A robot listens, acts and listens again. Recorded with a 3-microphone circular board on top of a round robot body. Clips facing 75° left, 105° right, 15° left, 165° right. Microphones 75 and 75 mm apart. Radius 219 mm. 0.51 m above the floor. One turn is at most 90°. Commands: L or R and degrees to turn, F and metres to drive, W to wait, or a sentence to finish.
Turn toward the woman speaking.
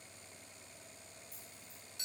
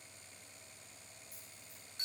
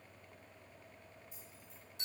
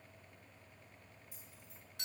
W
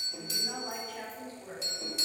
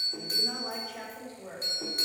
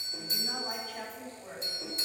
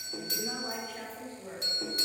R80
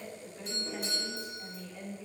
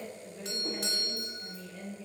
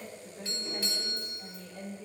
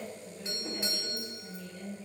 R10
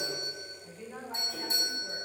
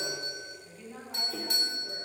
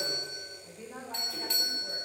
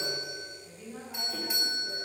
Facing the woman speaking.